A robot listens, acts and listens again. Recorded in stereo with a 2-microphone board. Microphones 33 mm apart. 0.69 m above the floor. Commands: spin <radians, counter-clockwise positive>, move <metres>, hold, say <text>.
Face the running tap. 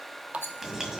spin -0.70
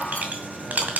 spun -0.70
hold
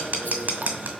hold
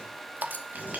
spin -1.48
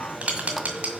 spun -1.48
hold
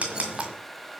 hold
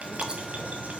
say I heard a running tap from this way, but can't make it out now.